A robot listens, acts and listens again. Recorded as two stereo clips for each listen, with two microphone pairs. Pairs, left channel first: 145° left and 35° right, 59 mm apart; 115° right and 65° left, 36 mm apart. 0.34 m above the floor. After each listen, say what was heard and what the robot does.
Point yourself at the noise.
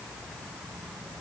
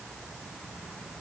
Keep listening.
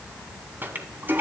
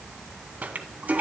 The toilet flushing: 20° left. Turn 20° left.
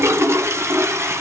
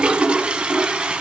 Facing the toilet flushing, 1 to 2 m away.